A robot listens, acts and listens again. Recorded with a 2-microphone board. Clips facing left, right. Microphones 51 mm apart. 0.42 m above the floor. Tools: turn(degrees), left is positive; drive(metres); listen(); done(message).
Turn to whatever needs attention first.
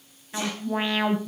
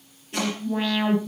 turn(degrees=25)
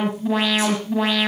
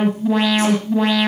done("Found it: an alarm, straight ahead.")